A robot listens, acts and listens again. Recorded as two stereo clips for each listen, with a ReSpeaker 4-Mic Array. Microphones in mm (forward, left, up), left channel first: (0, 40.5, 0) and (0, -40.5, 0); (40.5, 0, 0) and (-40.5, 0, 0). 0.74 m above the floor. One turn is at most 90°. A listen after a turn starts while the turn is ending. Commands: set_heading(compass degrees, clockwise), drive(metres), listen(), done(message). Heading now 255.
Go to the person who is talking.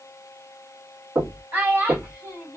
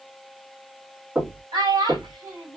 set_heading(345)
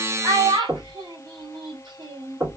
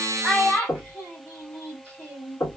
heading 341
set_heading(56)
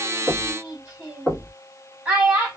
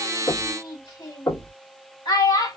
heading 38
set_heading(53)
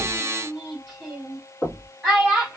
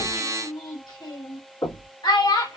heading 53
drive(1.0)
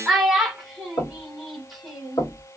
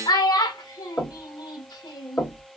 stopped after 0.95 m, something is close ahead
done("Arrived at the child speaking, straight ahead.")